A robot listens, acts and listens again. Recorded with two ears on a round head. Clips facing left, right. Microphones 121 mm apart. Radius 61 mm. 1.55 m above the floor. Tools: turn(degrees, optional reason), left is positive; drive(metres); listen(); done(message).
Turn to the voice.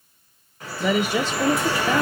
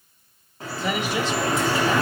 turn(degrees=90)
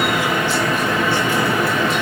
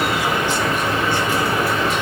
listen()
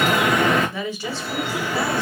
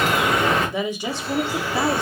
turn(degrees=-15, reason="The woman speaking is now 15° right.")
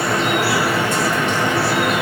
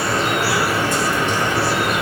listen()
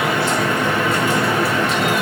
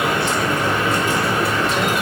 listen()
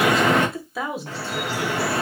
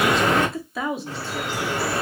done("Found it: a woman speaking, straight ahead, under 1 m away.")